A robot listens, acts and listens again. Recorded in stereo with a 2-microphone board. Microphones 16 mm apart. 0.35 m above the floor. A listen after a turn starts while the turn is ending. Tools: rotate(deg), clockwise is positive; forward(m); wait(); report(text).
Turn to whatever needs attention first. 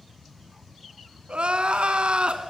rotate(90)
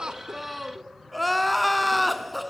report("Found it: crying, straight ahead.")